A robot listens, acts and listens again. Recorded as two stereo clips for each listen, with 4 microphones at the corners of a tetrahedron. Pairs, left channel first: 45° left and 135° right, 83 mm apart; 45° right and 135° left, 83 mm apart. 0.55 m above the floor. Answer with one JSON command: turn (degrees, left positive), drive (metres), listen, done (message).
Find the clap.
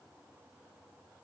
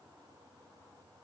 {"listen": true}
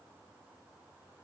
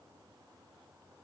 {"listen": true}
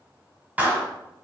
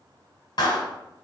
{"turn": -65}
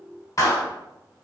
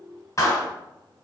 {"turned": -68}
{"done": "Found it: a clap, straight ahead, 1 to 2 m away."}